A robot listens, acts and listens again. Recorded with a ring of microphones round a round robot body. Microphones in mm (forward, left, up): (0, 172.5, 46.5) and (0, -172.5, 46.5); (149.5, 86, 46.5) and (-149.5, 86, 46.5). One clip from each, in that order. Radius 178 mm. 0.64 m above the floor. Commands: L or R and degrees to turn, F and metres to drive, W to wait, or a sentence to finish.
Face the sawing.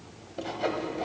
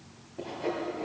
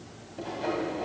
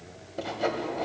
L140
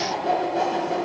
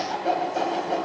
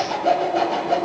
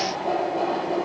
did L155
R15
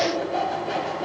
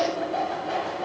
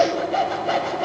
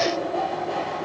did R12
Found it: sawing, straight ahead, 1 to 2 m away.